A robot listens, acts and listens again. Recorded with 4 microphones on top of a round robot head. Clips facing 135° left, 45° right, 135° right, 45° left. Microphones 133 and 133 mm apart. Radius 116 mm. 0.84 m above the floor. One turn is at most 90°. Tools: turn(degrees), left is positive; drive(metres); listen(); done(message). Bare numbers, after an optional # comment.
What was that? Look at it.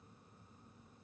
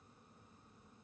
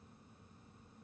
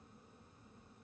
listen()
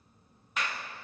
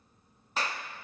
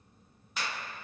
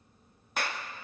# The clap: 10° left.
turn(10)
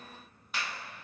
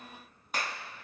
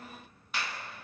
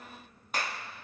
done("Facing the clap, 1 to 2 m away.")